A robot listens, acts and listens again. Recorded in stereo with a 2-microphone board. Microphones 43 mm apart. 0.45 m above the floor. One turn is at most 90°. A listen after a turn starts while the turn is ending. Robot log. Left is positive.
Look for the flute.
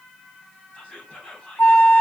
note: The flute: about 70° left or 110° left.
cmd yaw +70
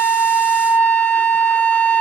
note: So it is at 25° left.
cmd yaw +25
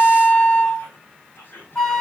note: The flute is now 15° left.
cmd yaw +15
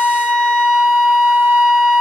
end: Found it: a flute, straight ahead.